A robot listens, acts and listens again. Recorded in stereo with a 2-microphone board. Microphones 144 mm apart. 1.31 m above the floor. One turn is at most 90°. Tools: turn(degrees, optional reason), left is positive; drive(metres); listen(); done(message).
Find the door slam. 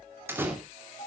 turn(degrees=-15, reason="The door slam: about 15° right or 165° right.")
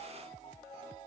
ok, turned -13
listen()
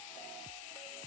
done("I heard a door slam, but can't make it out now. It was about 5° right or 150° right.")